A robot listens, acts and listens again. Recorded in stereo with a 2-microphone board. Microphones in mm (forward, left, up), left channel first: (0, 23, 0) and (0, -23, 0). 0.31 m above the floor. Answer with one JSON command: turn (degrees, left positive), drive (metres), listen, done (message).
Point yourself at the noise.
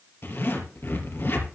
{"turn": 55}
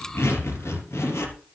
{"turn": 75}
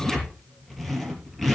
{"done": "Facing the zipper."}